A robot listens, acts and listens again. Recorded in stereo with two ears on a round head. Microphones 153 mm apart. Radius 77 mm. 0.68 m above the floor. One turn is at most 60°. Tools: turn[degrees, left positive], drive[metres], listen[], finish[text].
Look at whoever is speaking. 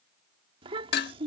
Thought: The child speaking: about 30° right or 150° right.
Action: turn[-30]
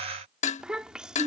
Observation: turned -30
Action: finish[Found it: a child speaking, straight ahead.]